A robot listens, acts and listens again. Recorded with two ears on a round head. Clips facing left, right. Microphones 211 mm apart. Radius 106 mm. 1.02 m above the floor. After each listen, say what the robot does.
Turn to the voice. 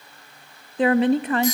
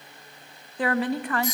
Turn 20° left.
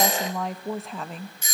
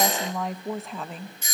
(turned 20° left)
Facing the woman speaking.